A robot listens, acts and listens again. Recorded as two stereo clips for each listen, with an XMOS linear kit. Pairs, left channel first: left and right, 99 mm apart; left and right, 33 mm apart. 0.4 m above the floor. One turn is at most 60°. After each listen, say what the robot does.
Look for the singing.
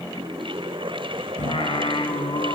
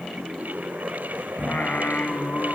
Turn 60° left.
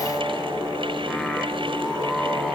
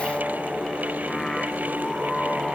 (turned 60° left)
Facing the singing.